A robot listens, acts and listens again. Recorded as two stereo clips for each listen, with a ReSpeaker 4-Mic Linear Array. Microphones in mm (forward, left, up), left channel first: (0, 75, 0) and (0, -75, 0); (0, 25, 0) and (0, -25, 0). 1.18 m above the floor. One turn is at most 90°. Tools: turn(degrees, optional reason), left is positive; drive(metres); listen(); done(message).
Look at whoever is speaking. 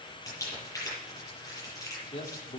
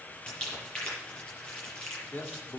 turn(degrees=45, reason="The man speaking: about 45° left or 135° left.")
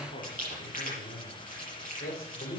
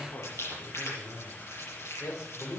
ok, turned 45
turn(degrees=90, reason="So it is at 100° left.")
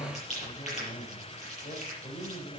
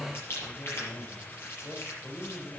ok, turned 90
turn(degrees=45, reason="The man speaking is now 45° left.")
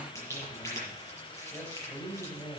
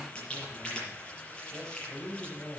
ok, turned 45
turn(degrees=10, reason="The man speaking is now 10° left.")
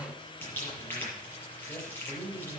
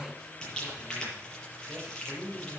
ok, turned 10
done("Facing the man speaking.")